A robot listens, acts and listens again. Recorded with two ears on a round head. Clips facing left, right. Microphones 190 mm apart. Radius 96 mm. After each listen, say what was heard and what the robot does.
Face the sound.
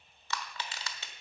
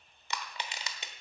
The crushing: about 20° right or 160° right. Turn 20° right.
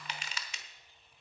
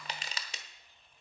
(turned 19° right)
So it is at 145° right. Turn 145° right.
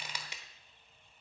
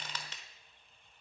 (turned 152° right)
The crushing is now 15° left. Turn 15° left.
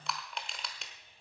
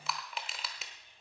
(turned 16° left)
Facing the crushing, 1 to 2 m away.